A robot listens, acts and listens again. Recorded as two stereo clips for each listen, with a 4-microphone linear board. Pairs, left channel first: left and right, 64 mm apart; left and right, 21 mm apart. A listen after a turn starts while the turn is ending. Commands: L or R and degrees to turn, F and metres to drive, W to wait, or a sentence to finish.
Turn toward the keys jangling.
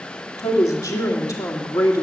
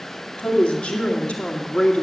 W
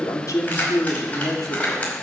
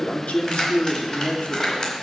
L25
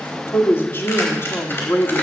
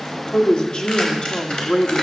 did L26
W
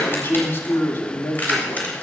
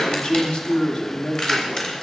L25
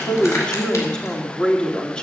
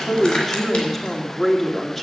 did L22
W
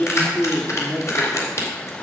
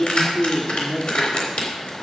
L130
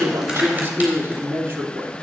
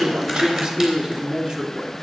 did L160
R30
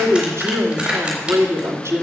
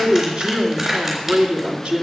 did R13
R15
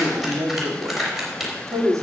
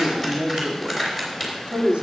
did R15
Found it: keys jangling, straight ahead.